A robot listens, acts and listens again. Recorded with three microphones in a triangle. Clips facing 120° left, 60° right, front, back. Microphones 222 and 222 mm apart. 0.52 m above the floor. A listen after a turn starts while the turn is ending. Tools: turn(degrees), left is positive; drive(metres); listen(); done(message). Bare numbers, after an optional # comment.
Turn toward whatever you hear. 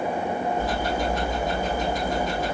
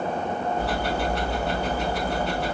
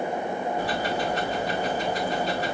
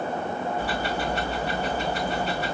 # The ticking: 50° right.
turn(-50)
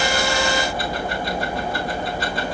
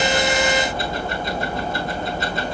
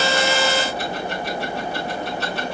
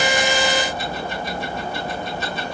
done("Found it: ticking, straight ahead.")